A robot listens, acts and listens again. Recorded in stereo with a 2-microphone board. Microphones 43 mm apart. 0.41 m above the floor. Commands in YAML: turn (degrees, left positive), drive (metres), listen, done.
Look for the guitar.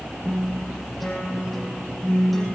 turn: 30
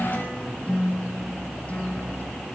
turn: 145
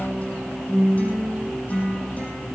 turn: 35
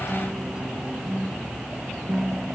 turn: -15
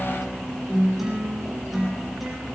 done: "Found it: a guitar, straight ahead, over 4 m away."